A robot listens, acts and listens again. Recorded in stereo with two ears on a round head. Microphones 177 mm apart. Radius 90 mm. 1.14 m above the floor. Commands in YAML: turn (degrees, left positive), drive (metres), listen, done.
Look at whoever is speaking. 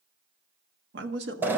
turn: -55
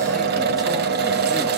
listen: true
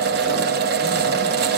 listen: true
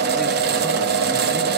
done: "I heard a man speaking, but can't make it out now. It was about straight ahead or 70° right."